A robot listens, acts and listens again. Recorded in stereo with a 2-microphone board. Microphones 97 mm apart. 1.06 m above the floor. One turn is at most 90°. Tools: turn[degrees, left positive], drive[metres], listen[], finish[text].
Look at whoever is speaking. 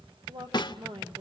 Thought: The woman speaking: about 55° right or 125° right.
Action: turn[-55]
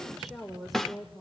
Action: finish[Facing the woman speaking.]